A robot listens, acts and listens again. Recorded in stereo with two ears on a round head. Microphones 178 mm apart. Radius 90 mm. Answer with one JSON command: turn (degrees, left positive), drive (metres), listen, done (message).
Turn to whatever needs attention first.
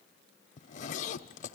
{"listen": true}
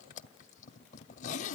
{"listen": true}
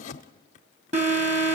{"turn": -35}
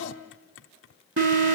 {"turn": -105}
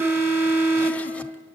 {"turn": -10}
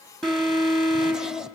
{"done": "Facing the alarm."}